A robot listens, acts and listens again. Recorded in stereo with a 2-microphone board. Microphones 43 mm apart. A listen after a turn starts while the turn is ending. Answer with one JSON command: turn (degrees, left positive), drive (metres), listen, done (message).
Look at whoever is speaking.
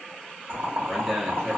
{"turn": 30}
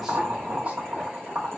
{"listen": true}
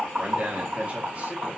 {"turn": -35}
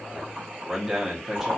{"done": "Facing the man speaking, under 1 m away."}